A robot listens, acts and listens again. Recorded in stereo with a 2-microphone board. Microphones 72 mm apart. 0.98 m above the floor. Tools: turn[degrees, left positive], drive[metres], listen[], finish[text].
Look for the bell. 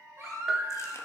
Action: turn[30]
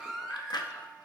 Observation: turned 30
Action: listen[]
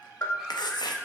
Thought: So it is at 145° left.
Action: turn[145]
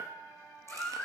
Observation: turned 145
Action: listen[]
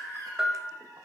Thought: The bell is now 10° right.
Action: turn[-10]
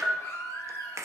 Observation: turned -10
Action: finish[Found it: a bell, straight ahead, 1 to 2 m away.]